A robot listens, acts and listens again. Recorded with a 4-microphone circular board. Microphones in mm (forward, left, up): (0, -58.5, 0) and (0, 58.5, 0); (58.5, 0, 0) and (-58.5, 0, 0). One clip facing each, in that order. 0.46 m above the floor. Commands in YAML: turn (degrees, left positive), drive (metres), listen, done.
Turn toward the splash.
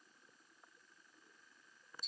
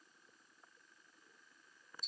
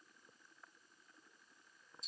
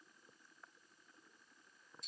listen: true
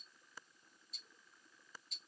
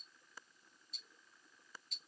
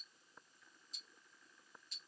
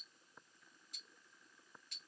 listen: true
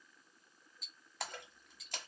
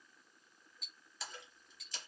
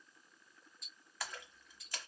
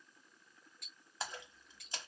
turn: -115
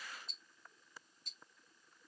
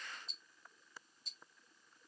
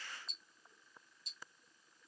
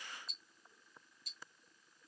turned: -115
done: "I heard a splash from this way, but can't make it out now."